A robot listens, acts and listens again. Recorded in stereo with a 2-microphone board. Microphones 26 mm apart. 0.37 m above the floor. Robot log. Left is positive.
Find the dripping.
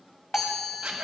note: The dripping: about 55° left or 125° left.
cmd yaw +55
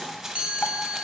cmd idle
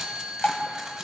note: So it is at 70° left.
cmd yaw +70
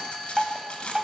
note: The dripping is now 20° right.
cmd yaw -20
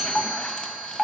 end: Found it: dripping, straight ahead.